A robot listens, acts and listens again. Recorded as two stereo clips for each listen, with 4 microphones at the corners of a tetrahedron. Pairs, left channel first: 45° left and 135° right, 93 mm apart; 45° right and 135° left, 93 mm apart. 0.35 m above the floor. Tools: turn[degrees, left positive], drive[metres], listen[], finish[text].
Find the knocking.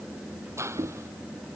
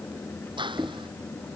Thought: The knocking: 165° right.
Action: turn[-165]
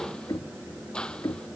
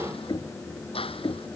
Action: finish[Found it: knocking, straight ahead.]